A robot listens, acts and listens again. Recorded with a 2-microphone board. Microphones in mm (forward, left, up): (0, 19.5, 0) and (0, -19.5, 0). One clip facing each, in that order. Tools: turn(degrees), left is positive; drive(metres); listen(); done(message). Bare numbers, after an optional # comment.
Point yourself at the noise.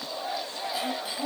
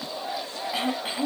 # The throat clearing: about 40° right or 140° right.
turn(-40)
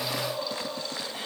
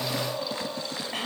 # So it is at 100° right.
turn(-100)
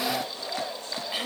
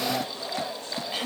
# The throat clearing is now 10° left.
turn(10)
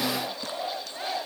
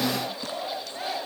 listen()
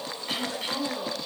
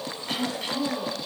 done("Facing the throat clearing, 1 to 2 m away.")